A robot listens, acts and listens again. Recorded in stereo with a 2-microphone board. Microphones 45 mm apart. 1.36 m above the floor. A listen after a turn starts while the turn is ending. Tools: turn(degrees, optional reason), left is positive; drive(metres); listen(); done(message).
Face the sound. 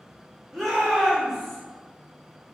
turn(degrees=30)
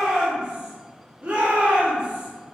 turn(degrees=-35, reason="So it is at 35° right.")
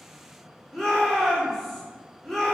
done("Facing the shout, 1 to 2 m away.")